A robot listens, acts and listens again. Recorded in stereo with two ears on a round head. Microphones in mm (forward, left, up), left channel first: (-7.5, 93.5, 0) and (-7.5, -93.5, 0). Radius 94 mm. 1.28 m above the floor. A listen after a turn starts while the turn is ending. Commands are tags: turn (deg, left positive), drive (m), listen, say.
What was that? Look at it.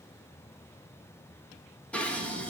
<turn deg="30"/>
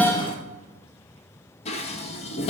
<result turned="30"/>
<turn deg="145"/>
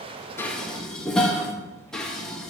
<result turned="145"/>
<say>Found it: dishes clattering, straight ahead, under 1 m away.</say>